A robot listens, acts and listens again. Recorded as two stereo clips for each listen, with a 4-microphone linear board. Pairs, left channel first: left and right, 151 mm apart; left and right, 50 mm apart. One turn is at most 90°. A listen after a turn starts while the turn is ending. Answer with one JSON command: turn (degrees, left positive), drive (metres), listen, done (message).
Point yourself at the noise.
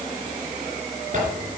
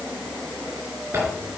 {"turn": -55}
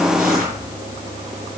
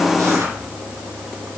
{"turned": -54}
{"listen": true}
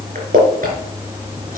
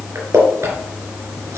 {"turn": -70}
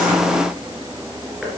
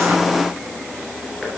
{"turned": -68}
{"listen": true}
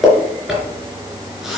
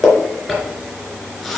{"done": "Facing the zipper, 2 to 4 m away."}